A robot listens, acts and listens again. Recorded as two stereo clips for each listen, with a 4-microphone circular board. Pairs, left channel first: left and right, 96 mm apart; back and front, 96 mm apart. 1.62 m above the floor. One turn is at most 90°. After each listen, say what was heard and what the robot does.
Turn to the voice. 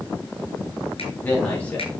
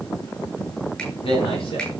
The man speaking: 165° left. Turn 90° left.
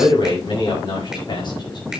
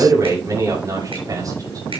The man speaking is now 50° left. Turn 50° left.
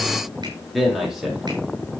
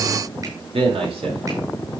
Found it: a man speaking, straight ahead.